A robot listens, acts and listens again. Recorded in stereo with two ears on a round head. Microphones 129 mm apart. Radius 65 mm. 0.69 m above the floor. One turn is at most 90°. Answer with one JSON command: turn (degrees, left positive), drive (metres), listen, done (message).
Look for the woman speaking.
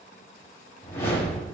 {"listen": true}
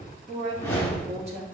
{"turn": -45}
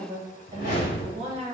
{"turn": -40}
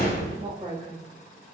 {"turn": -35}
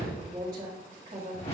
{"turn": -25}
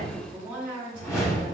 {"turn": -10}
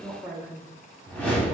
{"done": "Found it: a woman speaking, straight ahead."}